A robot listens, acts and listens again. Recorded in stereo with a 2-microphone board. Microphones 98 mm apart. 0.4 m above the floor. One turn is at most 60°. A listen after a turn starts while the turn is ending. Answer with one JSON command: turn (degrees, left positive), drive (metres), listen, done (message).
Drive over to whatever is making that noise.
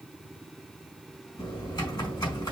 {"turn": 45}
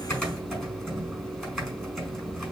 {"drive": 1.0}
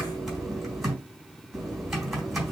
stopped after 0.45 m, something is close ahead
{"done": "Blocked. The typing on a keyboard is further on, straight ahead."}